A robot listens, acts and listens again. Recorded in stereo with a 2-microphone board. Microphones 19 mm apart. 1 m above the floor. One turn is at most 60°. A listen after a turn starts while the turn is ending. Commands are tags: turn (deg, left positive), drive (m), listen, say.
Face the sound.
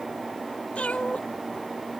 <turn deg="60"/>
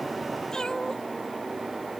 <turn deg="30"/>
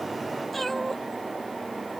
<turn deg="10"/>
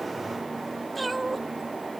<say>Found it: a cat meowing, straight ahead.</say>